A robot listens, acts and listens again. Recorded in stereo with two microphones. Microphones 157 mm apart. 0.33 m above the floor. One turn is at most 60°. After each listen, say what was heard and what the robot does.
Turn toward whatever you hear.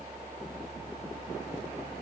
Keep listening.
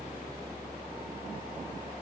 Keep listening.
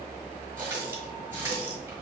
The running tap: about 15° right or 165° right. Turn 15° right.
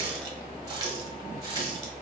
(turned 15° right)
So it is at 155° right. Turn 60° right.
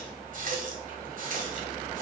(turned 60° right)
The running tap is now 85° right. Turn 60° right.
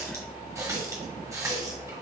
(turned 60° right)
The running tap is now 25° right. Turn 25° right.
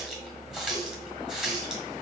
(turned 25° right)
Found it: a running tap, straight ahead, 1 to 2 m away.